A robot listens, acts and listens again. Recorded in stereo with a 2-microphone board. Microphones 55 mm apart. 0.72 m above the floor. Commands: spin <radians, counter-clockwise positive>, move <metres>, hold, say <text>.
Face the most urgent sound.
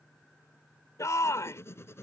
spin 1.22
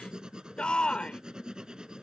spin 0.35
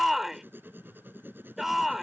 spin -0.17
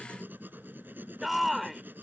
say Found it: a shout, straight ahead.